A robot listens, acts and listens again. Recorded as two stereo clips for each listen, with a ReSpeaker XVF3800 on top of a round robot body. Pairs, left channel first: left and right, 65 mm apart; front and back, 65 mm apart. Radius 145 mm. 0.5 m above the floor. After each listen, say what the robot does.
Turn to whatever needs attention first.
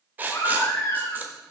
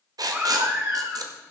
Turn 125° left.
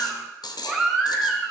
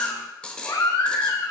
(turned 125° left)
Found it: a baby crying, straight ahead, 1 to 2 m away.